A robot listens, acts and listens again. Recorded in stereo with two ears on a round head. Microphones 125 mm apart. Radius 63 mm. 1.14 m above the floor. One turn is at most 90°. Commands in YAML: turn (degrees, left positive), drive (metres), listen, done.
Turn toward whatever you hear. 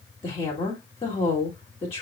turn: 45
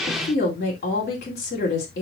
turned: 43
turn: 90
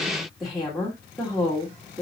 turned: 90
done: "Found it: a woman speaking, straight ahead."